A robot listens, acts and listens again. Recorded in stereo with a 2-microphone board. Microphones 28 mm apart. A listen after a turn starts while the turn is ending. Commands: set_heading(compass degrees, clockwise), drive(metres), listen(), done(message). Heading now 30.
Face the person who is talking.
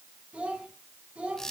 set_heading(75)
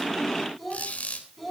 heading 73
done("Facing the child speaking.")